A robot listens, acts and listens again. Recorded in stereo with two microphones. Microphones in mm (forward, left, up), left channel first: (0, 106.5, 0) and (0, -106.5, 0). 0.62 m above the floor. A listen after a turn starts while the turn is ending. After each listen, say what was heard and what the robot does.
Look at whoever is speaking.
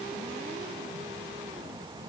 Keep listening.
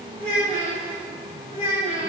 The child speaking: about 25° right or 155° right. Turn 25° right.
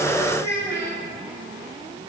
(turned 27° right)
So it is at 125° right. Turn 125° right.
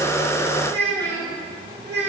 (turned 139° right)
The child speaking is now 10° left. Turn 10° left.
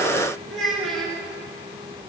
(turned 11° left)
Found it: a child speaking, straight ahead.